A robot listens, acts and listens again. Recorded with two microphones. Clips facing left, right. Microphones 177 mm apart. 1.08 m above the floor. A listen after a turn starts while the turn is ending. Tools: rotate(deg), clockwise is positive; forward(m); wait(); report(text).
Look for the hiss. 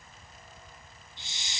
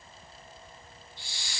rotate(-20)
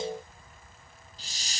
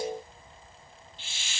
rotate(-140)
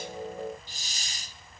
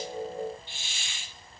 rotate(-40)
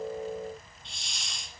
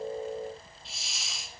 report("Facing the hiss.")